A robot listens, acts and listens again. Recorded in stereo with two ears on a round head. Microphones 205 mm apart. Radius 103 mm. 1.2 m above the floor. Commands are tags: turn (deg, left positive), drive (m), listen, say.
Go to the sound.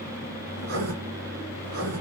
<turn deg="-50"/>
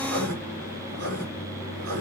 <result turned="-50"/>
<turn deg="-75"/>
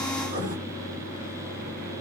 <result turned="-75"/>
<turn deg="-30"/>
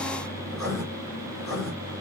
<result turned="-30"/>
<drive m="1.0"/>
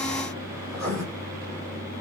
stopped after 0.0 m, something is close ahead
<say>Something is in my way. I am facing the writing but have not reached it.</say>